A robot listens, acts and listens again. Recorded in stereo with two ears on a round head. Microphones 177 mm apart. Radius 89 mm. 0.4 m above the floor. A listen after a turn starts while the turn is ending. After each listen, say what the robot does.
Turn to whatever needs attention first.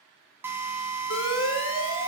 Turn 90° left.
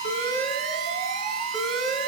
Found it: an alarm, straight ahead.